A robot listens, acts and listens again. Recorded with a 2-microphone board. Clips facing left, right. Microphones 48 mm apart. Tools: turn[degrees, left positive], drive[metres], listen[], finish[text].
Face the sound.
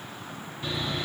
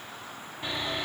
Thought: The sawing: about 25° right or 155° right.
Action: turn[-25]
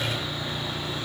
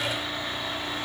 Thought: So it is at 130° right.
Action: turn[-130]
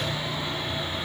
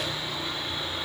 Thought: The sawing is now 30° left.
Action: turn[30]
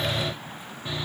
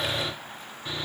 Thought: The sawing is now 10° left.
Action: turn[10]
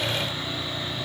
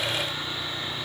Action: finish[Found it: sawing, straight ahead, 1 to 2 m away.]